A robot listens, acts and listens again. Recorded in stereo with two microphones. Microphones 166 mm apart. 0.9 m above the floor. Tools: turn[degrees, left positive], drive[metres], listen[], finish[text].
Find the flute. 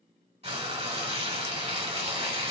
Action: listen[]
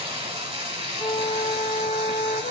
Action: turn[90]
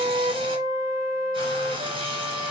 Thought: So it is at 20° right.
Action: turn[-20]
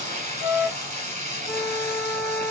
Action: finish[Found it: a flute, straight ahead, 2 to 4 m away.]